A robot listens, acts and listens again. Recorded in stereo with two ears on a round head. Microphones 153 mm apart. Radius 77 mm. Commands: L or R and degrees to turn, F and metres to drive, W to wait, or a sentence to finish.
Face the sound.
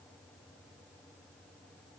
W
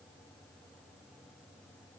W
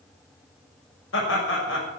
L90
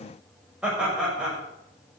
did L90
Found it: laughter, straight ahead.